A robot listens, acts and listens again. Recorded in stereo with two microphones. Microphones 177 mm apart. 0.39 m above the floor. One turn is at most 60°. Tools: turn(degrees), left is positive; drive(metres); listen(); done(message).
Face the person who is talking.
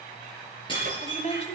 turn(degrees=40)
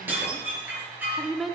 done("Facing the woman speaking, 1 to 2 m away.")